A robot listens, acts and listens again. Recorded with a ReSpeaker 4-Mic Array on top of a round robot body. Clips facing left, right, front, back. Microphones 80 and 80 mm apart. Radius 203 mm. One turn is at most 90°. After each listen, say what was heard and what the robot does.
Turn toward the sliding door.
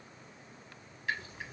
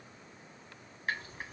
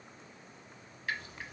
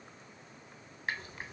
Keep listening.
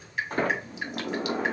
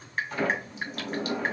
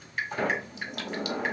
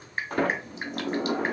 The sliding door: 140° left. Turn 90° left.
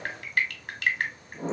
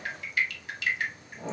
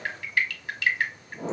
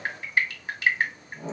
The sliding door is now 30° left. Turn 30° left.
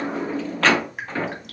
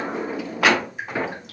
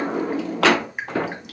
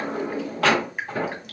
The sliding door is now 10° right. Turn 10° right.
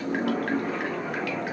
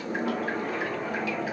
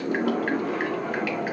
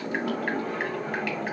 Found it: a sliding door, straight ahead.